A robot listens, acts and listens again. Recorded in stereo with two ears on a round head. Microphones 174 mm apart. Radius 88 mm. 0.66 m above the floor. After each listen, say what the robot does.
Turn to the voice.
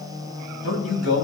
Turn 90° left.
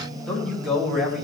Facing the man speaking.